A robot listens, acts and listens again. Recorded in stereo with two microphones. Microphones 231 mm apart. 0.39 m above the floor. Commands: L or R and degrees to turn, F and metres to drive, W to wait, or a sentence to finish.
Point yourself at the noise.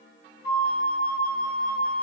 R45
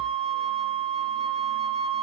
R85
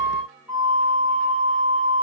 L10
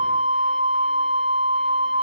Found it: a flute, straight ahead, over 4 m away.